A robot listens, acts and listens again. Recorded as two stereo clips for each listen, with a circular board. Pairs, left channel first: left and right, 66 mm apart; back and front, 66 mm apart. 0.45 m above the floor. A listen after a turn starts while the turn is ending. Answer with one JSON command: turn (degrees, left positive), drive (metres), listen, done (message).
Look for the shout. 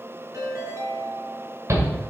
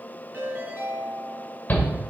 {"turn": -120}
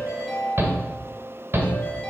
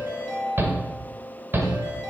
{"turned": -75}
{"turn": -45}
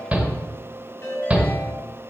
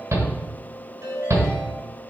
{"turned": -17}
{"turn": -25}
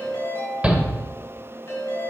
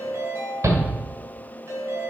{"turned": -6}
{"turn": -20}
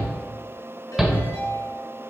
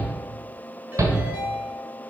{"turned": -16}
{"done": "Facing the shout, 1 to 2 m away."}